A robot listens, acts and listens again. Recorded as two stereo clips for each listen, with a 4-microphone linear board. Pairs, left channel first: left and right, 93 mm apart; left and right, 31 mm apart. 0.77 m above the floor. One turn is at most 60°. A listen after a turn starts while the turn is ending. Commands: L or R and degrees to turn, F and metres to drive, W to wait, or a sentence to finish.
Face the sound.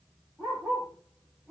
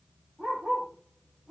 L30
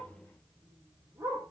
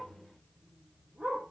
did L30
R30
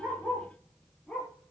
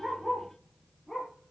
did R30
L10
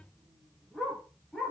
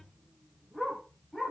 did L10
Found it: a dog barking, straight ahead.